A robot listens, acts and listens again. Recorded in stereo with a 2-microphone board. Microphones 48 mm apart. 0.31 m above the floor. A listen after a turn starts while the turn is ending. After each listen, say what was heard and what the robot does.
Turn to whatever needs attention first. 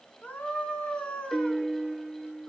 The scream: about 25° left or 155° left. Turn 25° left.
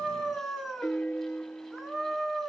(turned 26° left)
Found it: a scream, straight ahead, 2 to 4 m away.